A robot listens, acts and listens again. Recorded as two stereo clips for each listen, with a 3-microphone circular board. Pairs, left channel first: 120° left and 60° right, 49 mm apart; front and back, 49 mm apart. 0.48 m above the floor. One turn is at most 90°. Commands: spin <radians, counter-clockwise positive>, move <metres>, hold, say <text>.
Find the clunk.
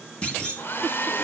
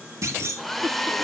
spin -1.57
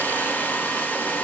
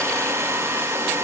spin -1.48
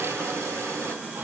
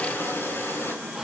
say I heard a clunk from this way, but can't make it out now.